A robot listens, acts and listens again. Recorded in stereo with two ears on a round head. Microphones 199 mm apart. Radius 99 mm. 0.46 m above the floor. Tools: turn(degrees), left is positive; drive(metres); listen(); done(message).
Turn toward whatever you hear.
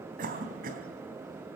turn(degrees=-40)
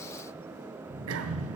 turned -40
turn(degrees=-100)
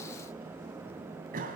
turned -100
turn(degrees=-40)
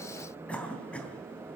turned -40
done("Facing the cough, 2 to 4 m away.")